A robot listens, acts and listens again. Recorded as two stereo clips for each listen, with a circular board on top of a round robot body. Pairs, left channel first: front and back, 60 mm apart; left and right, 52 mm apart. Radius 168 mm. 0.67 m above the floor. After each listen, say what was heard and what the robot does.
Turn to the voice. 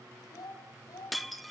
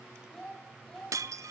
The child speaking: 15° left. Turn 15° left.
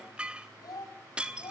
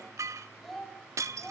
The child speaking is now 10° left. Turn 10° left.
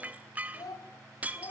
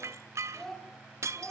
The child speaking is now 10° left. Turn 10° left.
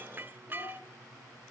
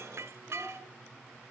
Keep listening.
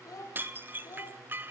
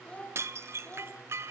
The child speaking is now 30° left. Turn 30° left.
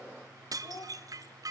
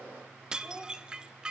The child speaking is now 10° right. Turn 10° right.
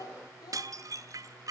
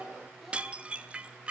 Facing the child speaking.